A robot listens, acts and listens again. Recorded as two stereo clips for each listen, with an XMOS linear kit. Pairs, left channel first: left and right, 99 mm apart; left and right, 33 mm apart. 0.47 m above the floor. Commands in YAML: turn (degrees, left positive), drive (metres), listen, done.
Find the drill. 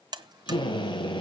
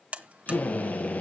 turn: 50
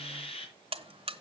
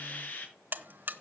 turn: 75
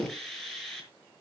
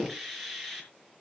done: "Facing the drill, over 4 m away."